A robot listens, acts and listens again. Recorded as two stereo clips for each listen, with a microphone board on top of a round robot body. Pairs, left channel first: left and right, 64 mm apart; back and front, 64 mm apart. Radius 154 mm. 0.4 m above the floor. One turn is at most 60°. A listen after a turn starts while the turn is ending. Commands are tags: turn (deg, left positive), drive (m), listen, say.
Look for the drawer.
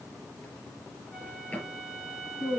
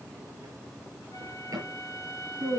<turn deg="25"/>
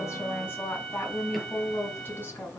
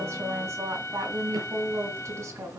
<listen/>
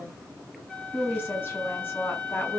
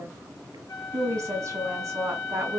<listen/>
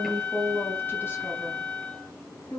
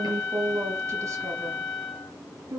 <say>Facing where the drawer came from. I can't hear it now.</say>